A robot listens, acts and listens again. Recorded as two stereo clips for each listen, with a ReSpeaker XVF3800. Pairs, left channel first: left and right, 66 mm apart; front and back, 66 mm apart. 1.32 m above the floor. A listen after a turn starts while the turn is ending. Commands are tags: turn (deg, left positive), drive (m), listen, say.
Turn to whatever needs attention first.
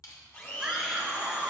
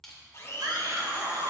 <turn deg="-170"/>
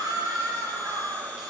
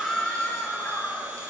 <turn deg="-55"/>
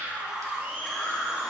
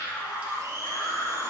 <say>Facing the scream.</say>